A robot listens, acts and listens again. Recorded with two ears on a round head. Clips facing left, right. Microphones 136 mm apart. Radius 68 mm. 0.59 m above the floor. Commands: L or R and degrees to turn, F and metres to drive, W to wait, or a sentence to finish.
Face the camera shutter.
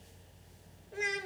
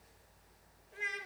W
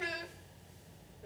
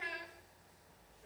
W
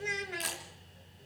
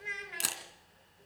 R55
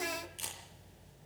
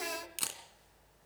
R75
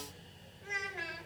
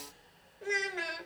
W
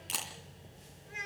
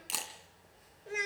Found it: a camera shutter, straight ahead.